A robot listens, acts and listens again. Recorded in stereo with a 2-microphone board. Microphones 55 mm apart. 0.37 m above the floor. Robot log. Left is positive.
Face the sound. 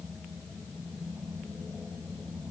cmd idle
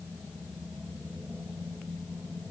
cmd idle
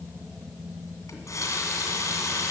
note: The running tap: about 75° left or 105° left.
cmd yaw +75
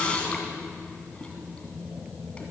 note: So it is at 20° left.
cmd yaw +20
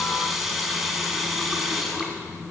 end: Facing the running tap.